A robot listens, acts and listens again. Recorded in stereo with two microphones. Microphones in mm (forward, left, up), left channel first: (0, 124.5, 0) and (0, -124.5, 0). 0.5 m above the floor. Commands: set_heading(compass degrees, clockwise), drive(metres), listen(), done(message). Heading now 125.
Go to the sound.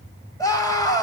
set_heading(95)
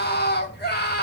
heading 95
set_heading(320)
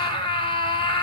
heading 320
set_heading(300)
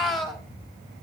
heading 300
drive(1.0)
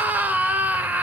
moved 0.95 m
drive(1.0)
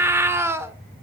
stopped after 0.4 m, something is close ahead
set_heading(310)
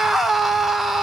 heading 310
done("Arrived at the scream, straight ahead.")